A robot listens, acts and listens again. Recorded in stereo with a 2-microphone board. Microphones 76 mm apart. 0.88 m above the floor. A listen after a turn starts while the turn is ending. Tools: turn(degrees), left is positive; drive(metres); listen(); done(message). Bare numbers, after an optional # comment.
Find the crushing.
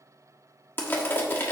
# The crushing: about 30° left or 150° left.
turn(30)
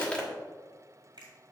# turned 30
listen()
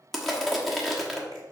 done("Facing the crushing, 1 to 2 m away.")